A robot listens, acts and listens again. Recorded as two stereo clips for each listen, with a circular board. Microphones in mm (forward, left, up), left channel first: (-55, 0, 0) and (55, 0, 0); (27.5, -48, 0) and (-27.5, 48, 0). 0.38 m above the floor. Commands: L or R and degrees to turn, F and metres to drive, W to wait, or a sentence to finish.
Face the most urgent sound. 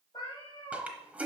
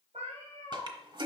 W
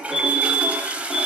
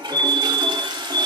L165
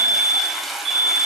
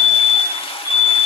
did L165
Facing the fire alarm.